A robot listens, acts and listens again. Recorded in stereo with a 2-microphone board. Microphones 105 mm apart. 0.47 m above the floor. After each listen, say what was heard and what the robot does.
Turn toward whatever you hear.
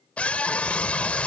Turn 30° left.
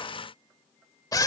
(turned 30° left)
So it is at 135° left. Turn 135° left.
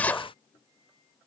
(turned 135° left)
The scream is now 15° left. Turn 15° left.
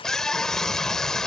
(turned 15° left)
Found it: a scream, straight ahead.